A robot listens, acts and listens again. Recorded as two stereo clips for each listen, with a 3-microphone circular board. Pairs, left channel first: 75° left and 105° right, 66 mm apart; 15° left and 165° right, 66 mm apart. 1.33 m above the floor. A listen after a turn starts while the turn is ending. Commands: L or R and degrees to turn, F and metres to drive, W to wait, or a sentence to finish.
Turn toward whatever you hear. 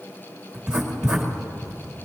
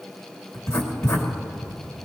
R25
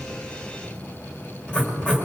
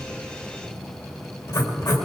Found it: writing, straight ahead.